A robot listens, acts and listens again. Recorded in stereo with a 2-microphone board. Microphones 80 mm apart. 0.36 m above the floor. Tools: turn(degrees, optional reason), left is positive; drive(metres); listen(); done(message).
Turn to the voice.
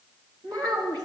turn(degrees=-60, reason="The child speaking: about 60° right or 120° right.")
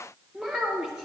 turn(degrees=-10, reason="So it is at 10° right.")
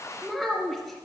done("Facing the child speaking, 2 to 4 m away.")